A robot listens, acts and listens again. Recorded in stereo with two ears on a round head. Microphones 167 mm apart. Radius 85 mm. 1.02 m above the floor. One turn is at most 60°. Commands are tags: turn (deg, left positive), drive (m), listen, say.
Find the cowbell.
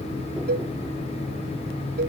<turn deg="-50"/>
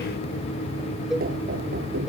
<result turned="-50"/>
<say>Facing the cowbell.</say>